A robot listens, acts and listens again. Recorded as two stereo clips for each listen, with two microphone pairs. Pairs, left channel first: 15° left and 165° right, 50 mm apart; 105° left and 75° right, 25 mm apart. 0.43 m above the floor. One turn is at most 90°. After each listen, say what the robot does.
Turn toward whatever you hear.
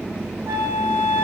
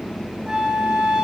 Turn 90° right.
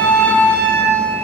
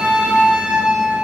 Turn 55° right.
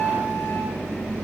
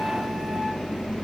Found it: a flute, straight ahead.